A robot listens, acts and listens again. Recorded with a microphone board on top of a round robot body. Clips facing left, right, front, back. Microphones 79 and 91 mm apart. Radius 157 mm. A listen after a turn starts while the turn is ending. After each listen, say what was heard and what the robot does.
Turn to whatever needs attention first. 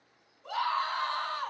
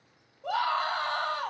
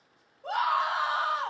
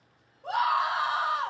The scream: 90° right. Turn 90° right.
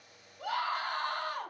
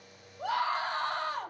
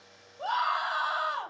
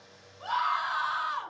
The scream is now 30° right. Turn 30° right.
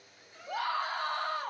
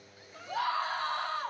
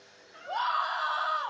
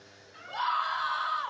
The scream is now 10° left. Turn 10° left.
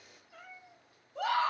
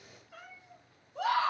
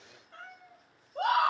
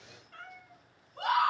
Facing the scream.